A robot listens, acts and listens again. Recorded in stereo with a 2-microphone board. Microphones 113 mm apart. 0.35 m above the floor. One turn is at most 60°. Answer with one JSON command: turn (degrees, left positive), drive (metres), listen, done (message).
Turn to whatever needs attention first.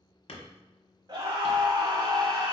{"turn": -40}
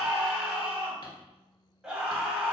{"turn": -10}
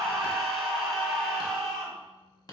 {"done": "Facing the scream."}